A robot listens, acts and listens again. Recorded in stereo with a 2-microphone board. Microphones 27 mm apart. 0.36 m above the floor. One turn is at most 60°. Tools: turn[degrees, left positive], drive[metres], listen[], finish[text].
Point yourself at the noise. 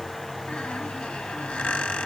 Thought: The squeak: about 65° left or 115° left.
Action: turn[60]
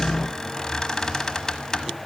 Thought: So it is at 20° left.
Action: turn[20]
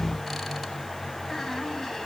Action: listen[]
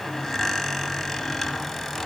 Action: finish[Found it: a squeak, straight ahead.]